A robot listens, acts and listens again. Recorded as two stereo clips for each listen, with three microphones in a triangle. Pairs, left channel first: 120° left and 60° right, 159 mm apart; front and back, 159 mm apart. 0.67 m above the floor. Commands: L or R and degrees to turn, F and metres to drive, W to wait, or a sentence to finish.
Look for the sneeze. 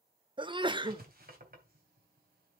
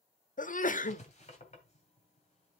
R10
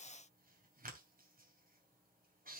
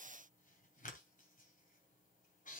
I heard a sneeze from this way, but can't make it out now.